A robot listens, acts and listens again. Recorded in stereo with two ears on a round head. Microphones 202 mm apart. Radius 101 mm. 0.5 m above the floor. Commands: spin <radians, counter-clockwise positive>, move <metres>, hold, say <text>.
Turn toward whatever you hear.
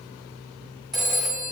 spin 0.52
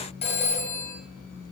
spin 2.62
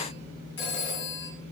spin 0.96
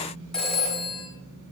say Found it: a phone ringing, straight ahead, 1 to 2 m away.